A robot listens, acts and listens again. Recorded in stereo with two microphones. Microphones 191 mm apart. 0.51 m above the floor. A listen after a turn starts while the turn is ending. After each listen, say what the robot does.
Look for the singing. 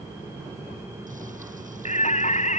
Turn 40° left.
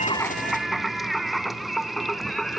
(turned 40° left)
Facing the singing.